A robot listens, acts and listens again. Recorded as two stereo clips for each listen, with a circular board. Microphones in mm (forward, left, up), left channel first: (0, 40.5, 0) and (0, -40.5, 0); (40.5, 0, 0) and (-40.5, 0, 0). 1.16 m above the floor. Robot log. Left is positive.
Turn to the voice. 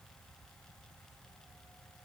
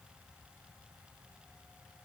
cmd idle
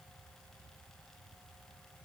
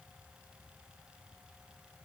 cmd idle
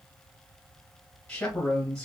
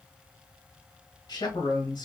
note: The man speaking: 10° left.
cmd yaw +10
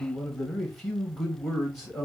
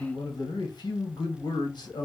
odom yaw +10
end: Found it: a man speaking, straight ahead.